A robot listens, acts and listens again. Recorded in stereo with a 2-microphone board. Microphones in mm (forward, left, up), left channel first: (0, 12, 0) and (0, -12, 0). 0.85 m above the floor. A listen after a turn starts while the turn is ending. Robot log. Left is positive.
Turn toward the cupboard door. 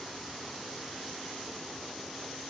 cmd idle
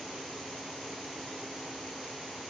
cmd idle
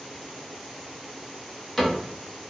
cmd yaw +30
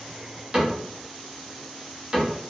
note: So it is at 25° right.
cmd yaw -25
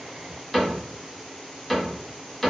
end: Facing the cupboard door.